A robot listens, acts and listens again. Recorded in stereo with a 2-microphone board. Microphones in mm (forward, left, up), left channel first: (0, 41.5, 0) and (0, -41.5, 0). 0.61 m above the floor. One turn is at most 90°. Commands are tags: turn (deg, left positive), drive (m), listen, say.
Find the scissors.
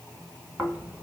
<listen/>
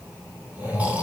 <listen/>
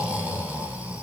<say>I can't make out scissors, only snoring.</say>